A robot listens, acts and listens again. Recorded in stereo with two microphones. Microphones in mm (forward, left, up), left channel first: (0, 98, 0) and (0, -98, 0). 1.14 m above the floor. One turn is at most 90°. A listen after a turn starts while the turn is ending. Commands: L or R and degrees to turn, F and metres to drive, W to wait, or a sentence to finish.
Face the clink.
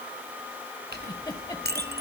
R55
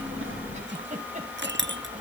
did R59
R65
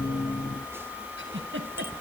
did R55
R10
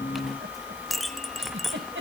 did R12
Found it: a clink, straight ahead, 1 to 2 m away.